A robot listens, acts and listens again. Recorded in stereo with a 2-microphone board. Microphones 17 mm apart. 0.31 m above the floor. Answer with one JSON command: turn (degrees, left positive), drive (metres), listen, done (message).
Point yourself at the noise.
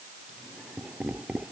{"turn": -60}
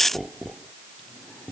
{"done": "Facing the laughter."}